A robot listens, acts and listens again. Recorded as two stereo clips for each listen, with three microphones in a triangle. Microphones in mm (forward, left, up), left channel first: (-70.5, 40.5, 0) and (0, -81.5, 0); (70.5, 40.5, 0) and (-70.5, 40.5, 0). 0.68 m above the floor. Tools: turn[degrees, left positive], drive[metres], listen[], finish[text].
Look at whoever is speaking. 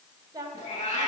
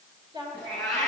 Thought: The woman speaking: 125° right.
Action: turn[-125]
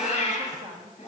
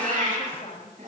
Thought: The woman speaking is now 50° right.
Action: turn[-50]
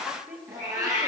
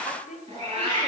Thought: The woman speaking is now 20° left.
Action: turn[20]
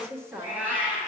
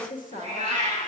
Thought: The woman speaking is now 10° left.
Action: turn[10]
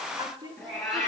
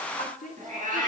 Action: finish[Facing the woman speaking, 1 to 2 m away.]